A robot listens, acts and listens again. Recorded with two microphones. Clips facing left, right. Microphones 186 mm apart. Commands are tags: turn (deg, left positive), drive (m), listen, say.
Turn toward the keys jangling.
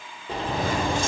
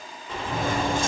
<turn deg="-55"/>
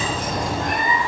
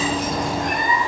<turn deg="-60"/>
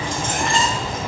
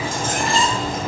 <say>Found it: keys jangling, straight ahead, 2 to 4 m away.</say>